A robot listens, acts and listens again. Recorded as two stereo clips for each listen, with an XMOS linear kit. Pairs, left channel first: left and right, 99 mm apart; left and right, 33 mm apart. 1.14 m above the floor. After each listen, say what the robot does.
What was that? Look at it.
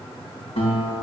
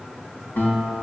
Turn 75° left.
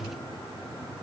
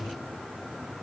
Keep listening.
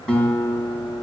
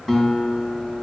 Turn 10° left.
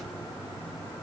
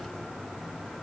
Keep listening.
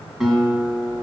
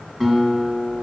Found it: a guitar, straight ahead, 2 to 4 m away.